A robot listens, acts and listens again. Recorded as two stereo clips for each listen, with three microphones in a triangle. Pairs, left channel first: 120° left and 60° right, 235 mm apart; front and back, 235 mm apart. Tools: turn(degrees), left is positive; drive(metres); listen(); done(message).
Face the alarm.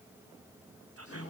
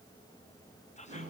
listen()
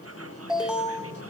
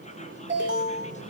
turn(degrees=-145)
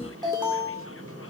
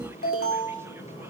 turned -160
turn(degrees=10)
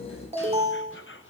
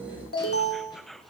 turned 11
done("Facing the alarm, 2 to 4 m away.")